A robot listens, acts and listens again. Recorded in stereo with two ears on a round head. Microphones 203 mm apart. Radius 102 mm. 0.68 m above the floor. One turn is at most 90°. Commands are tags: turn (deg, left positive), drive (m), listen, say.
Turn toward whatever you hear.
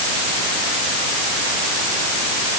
<listen/>
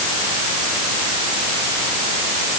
<listen/>
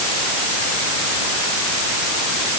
<say>I can't make out anything to turn to.</say>